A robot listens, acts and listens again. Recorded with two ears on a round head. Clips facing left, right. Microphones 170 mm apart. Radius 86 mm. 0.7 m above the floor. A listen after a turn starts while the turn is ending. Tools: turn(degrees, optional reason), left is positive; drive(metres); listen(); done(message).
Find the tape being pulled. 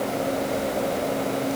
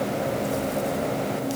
listen()
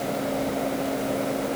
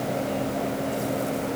listen()
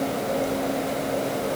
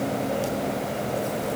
done("I can't make out tape being pulled to turn to.")